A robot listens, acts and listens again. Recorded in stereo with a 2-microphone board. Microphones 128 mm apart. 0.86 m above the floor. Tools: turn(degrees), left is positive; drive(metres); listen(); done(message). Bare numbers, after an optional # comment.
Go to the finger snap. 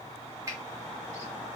# The finger snap: about 25° right or 155° right.
turn(-25)
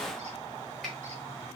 listen()
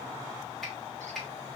drive(1.0)
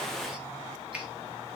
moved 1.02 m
# The finger snap is now 10° right.
turn(-10)
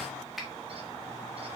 drive(1.0)
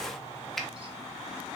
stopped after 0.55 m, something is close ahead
done("I am next to the finger snap.")